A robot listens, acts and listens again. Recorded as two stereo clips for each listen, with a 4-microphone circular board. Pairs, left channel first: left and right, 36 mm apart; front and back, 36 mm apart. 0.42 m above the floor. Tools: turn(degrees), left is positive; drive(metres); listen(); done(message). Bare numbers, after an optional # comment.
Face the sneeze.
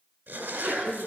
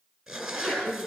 # The sneeze: 65° right.
turn(-65)
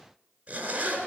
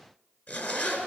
done("Facing where the sneeze came from. I can't hear it now.")